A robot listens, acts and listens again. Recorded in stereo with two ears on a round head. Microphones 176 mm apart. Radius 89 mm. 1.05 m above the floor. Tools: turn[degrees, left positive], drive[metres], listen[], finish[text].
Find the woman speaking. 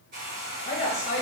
Thought: The woman speaking: about 35° left or 145° left.
Action: turn[35]
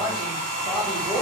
Action: finish[Facing the woman speaking.]